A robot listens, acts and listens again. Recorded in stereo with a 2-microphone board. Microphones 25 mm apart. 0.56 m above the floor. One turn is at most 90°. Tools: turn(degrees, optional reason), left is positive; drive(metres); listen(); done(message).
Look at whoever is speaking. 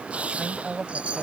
turn(degrees=-25, reason="The woman speaking: about 25° right or 155° right.")
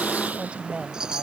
turn(degrees=-90, reason="So it is at 130° right.")
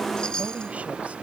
turn(degrees=-40, reason="Nothing new. It was at 40° right.")
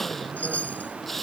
listen()
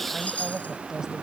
turn(degrees=-25, reason="The woman speaking is now 25° right.")
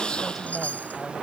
listen()
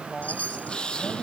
listen()
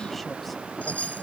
done("Facing where the woman speaking came from. I can't hear it now.")